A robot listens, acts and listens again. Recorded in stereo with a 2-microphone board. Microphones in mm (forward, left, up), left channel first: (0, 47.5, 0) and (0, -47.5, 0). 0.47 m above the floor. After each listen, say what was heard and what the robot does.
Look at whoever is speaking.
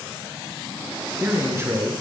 The man speaking: about 30° right or 150° right. Turn 30° right.
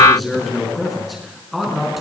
Found it: a man speaking, straight ahead, over 4 m away.